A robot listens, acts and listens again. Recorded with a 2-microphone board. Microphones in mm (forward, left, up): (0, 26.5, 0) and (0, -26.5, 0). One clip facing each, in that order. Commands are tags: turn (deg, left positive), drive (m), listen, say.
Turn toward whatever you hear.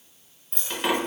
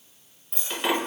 <turn deg="30"/>
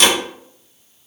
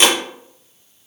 <turn deg="-30"/>
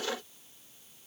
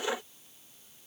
<say>Facing where the dropped coin came from. I can't hear it now.</say>